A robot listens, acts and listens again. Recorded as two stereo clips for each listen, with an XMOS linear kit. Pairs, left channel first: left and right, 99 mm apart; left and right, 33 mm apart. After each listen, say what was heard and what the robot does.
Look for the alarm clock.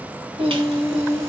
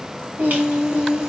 Keep listening.
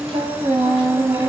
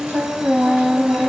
Keep listening.
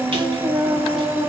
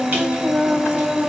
I can't make out an alarm clock to turn to.